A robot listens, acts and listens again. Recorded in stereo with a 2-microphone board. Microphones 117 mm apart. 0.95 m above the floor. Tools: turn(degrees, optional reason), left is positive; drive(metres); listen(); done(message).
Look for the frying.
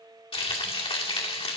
turn(degrees=50, reason="The frying: about 50° left or 130° left.")
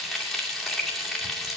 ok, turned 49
done("Facing the frying, 2 to 4 m away.")